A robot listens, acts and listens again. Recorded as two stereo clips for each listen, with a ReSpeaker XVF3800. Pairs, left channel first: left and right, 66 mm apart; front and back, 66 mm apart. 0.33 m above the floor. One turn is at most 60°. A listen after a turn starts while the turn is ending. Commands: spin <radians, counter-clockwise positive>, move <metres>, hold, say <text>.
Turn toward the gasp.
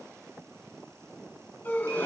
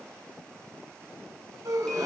spin 1.05
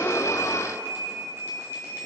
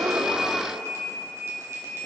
spin 1.05
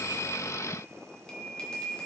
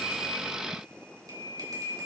spin 0.52
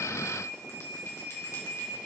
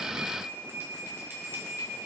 say I heard a gasp from this way, but can't make it out now.